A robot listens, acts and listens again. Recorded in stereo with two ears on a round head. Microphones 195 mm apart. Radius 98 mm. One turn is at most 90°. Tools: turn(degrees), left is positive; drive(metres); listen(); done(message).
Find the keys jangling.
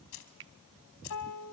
turn(degrees=55)
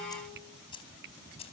turn(degrees=25)
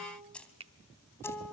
done("Facing the keys jangling.")